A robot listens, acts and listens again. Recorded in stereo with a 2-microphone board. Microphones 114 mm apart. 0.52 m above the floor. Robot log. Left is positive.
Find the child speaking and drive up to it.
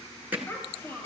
note: The child speaking: about 20° left or 160° left.
cmd yaw +20
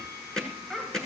cmd fwd 1.0
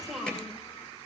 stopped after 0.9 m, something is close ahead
end: Arrived at the child speaking, straight ahead.